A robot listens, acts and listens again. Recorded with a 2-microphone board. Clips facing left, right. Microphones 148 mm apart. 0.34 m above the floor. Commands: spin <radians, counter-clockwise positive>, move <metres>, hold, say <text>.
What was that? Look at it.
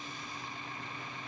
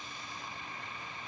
hold
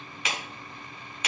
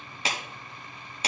spin -0.61
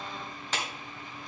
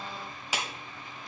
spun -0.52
spin -0.17
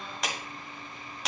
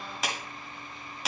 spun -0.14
say Found it: a clap, straight ahead.